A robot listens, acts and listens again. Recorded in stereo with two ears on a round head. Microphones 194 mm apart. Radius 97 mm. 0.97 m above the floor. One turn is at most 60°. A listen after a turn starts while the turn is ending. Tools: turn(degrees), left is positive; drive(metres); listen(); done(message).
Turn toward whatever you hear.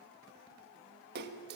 turn(degrees=-50)
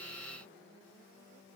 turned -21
listen()
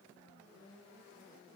done("I heard a splash, but can't make it out now. It was about 30° right or 110° right.")